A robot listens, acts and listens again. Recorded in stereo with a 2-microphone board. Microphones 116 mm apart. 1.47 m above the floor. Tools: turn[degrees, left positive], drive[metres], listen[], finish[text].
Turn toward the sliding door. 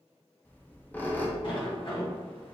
Thought: The sliding door: about 50° left or 130° left.
Action: turn[50]
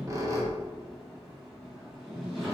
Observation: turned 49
Action: finish[Found it: a sliding door, straight ahead, 1 to 2 m away.]